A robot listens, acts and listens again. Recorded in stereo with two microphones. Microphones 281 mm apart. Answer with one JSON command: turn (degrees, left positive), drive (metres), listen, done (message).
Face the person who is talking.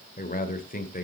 {"turn": 30}
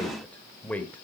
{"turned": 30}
{"done": "Facing the man speaking, 1 to 2 m away."}